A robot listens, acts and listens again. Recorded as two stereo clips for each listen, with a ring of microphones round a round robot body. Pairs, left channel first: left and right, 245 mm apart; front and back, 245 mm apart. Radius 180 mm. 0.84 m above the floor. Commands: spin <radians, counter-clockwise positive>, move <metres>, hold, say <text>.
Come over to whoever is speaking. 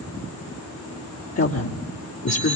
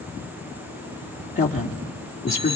spin 1.05
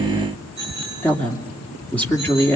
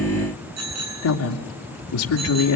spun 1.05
move 1.0
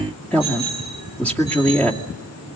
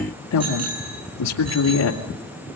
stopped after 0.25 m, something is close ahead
say Something is in my way. I am facing the woman speaking but have not reached it.